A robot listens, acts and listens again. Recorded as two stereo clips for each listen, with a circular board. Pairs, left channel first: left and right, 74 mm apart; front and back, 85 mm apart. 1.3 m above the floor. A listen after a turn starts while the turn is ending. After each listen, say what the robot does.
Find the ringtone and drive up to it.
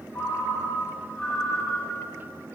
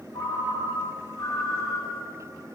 Turn 25° left.
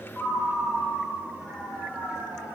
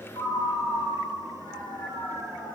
Turn 15° left.
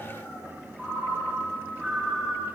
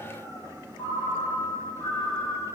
Drive 1.0 m forward.
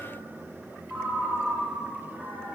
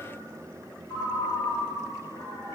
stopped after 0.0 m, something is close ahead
Something is in my way. I am facing the ringtone but have not reached it.